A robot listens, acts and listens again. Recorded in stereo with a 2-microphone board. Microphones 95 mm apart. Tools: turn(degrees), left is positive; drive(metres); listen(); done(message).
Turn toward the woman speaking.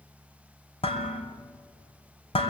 listen()
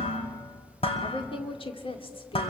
turn(degrees=70)
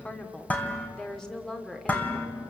done("Found it: a woman speaking, straight ahead, 2 to 4 m away.")